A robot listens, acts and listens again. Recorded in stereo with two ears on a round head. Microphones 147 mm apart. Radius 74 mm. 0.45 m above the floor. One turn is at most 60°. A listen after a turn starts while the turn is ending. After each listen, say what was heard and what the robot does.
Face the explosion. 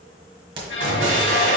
Turn 60° right.
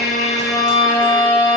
Nothing new. It was at 30° right. Turn 30° right.
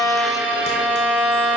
I heard an explosion from this way, but can't make it out now.